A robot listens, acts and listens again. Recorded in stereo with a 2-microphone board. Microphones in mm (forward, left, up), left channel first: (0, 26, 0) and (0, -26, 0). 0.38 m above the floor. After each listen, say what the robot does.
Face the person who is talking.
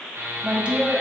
Turn 20° right.
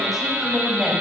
Facing the woman speaking, 1 to 2 m away.